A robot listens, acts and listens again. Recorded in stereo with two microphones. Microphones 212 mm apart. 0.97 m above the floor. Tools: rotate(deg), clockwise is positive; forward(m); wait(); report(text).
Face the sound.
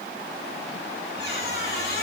rotate(-50)
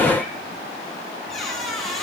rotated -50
report("Facing the squeak, over 4 m away.")